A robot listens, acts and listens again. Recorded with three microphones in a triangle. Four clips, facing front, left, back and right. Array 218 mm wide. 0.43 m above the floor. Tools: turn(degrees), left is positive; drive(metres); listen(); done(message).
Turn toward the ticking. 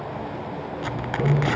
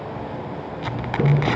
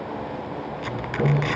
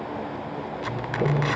turn(degrees=100)
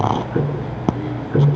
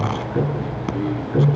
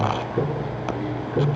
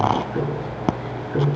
done("Facing the ticking.")